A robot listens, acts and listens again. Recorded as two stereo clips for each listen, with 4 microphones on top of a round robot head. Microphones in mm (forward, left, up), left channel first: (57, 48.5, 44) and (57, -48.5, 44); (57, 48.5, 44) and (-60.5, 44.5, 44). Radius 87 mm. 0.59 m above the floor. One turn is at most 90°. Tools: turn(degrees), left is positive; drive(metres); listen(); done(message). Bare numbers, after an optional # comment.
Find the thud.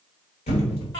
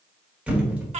# The thud: 100° left.
turn(90)
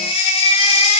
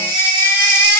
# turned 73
# Nothing new. It was at 30° left.
turn(30)
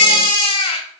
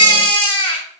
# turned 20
# Nothing new. It was at 10° left.
turn(10)
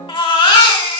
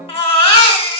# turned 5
done("I heard a thud from this way, but can't make it out now.")